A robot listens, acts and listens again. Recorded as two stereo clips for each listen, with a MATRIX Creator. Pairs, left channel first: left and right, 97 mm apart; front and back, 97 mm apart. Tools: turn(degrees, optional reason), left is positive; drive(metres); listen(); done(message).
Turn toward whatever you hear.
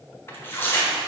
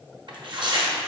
turn(degrees=155, reason="The tearing paper: 155° left.")
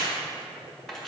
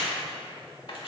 listen()
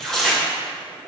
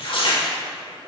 done("Facing the tearing paper.")